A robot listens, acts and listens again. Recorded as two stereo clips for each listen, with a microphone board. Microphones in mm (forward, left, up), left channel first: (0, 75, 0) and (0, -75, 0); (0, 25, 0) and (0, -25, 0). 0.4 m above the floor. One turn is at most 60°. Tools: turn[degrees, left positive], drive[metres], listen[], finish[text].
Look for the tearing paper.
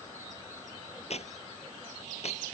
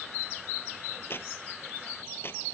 Thought: The tearing paper: about 45° left or 135° left.
Action: turn[45]
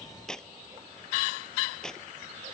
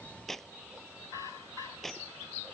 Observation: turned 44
Action: finish[Facing the tearing paper.]